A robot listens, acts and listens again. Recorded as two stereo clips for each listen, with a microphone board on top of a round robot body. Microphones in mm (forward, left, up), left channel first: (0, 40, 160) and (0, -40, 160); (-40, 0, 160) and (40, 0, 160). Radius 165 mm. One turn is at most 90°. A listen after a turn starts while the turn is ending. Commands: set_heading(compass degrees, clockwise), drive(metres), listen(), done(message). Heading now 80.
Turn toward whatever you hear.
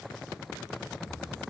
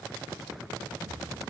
set_heading(65)
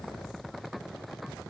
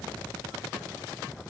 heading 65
done("Facing where the explosion came from. I can't hear it now.")